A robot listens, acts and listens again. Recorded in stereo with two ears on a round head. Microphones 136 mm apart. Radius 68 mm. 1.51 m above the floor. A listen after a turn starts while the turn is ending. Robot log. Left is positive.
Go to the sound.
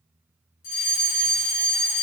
note: The fire alarm: about 65° left or 115° left.
cmd yaw +65
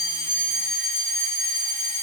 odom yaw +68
note: So it is at 30° left.
cmd yaw +30
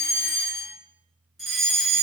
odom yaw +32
cmd fwd 1.0
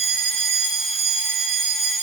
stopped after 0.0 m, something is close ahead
end: Blocked. The fire alarm is further on, straight ahead.